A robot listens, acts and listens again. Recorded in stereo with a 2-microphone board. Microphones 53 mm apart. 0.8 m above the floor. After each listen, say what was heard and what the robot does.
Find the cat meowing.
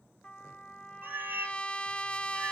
The cat meowing: about 40° right or 140° right. Turn 40° right.
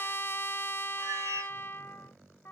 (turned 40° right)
So it is at 100° right. Turn 100° right.
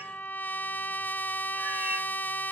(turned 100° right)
Keep listening.
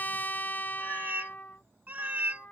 The cat meowing is now 35° right. Turn 35° right.
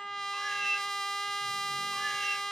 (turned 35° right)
Found it: a cat meowing, straight ahead.